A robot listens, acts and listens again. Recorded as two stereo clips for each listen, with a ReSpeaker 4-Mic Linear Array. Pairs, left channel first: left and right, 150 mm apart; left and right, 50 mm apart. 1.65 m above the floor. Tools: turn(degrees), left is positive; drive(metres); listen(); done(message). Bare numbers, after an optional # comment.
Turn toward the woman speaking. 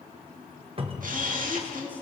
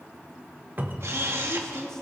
turn(30)
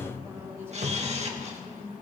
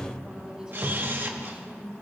# So it is at 15° right.
turn(-15)
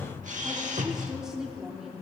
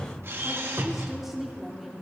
done("Found it: a woman speaking, straight ahead, 2 to 4 m away.")